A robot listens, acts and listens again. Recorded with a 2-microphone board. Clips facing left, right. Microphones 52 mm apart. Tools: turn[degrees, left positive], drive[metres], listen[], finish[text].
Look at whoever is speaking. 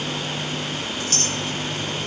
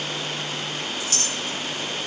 Action: listen[]
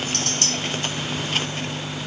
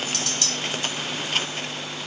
Action: listen[]
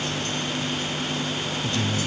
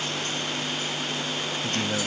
Thought: The man speaking: about 45° right or 135° right.
Action: turn[-45]
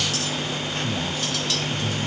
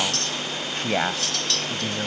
Thought: So it is at 90° right.
Action: turn[-90]
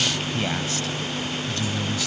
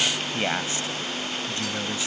Thought: The man speaking is now 20° right.
Action: turn[-20]
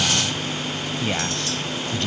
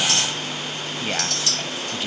Action: finish[Found it: a man speaking, straight ahead.]